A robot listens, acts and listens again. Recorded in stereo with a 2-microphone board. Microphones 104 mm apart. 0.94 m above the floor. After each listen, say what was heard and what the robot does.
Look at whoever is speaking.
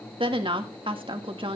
The woman speaking: about 55° right or 125° right. Turn 55° right.
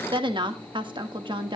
So it is at 60° right. Turn 60° right.
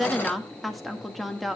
Facing the woman speaking, 1 to 2 m away.